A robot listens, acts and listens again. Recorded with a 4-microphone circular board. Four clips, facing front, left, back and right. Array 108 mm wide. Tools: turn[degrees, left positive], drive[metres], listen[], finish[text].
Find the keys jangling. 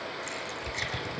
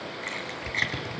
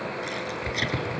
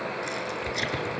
Thought: The keys jangling: 95° left.
Action: turn[95]
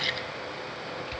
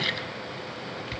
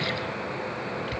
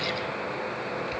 Action: listen[]
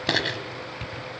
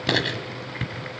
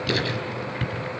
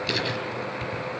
Thought: The keys jangling is now 40° left.
Action: turn[40]
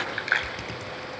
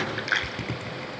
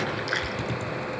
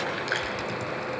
Thought: The keys jangling is now 10° left.
Action: turn[10]
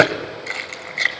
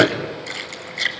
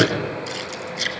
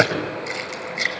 Action: finish[Facing the keys jangling, 2 to 4 m away.]